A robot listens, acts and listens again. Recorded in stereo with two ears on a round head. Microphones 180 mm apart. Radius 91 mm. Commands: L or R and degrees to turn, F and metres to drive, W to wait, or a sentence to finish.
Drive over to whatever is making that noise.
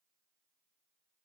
W
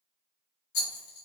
L55
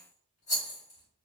L45
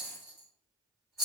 F1.0
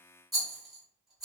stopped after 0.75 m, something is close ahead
Arrived at the rattle, straight ahead.